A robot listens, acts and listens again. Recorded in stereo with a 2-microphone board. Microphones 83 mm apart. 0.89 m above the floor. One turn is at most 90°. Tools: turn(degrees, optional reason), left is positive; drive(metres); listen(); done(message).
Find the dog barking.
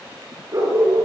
turn(degrees=-35, reason="The dog barking: about 35° right or 145° right.")
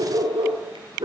turn(degrees=-90, reason="So it is at 110° right.")
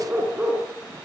turn(degrees=-20, reason="The dog barking is now 20° right.")
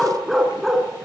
done("Facing the dog barking, 2 to 4 m away.")